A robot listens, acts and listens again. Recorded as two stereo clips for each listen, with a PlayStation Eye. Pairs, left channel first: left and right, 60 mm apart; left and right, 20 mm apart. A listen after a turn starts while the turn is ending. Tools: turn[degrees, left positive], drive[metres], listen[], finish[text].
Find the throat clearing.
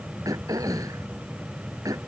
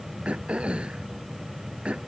Action: turn[-90]
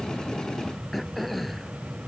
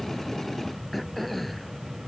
Action: finish[Found it: throat clearing, straight ahead.]